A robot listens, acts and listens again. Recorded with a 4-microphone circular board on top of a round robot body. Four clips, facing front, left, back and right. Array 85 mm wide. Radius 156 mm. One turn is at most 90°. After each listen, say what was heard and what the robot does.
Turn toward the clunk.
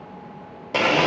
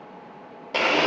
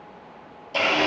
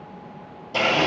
Keep listening.
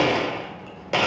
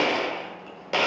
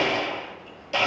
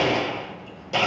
Keep listening.
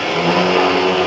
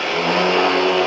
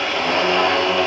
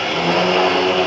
I can't make out a clunk, only a blender.